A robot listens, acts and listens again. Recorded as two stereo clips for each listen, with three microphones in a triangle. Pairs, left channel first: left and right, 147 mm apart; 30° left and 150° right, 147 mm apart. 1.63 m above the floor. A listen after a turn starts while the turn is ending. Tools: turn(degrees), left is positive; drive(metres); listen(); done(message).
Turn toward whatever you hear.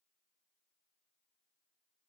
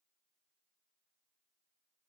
listen()
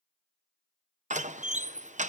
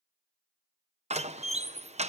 turn(degrees=-115)
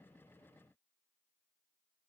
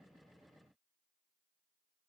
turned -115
done("I heard a door slam from this way, but can't make it out now.")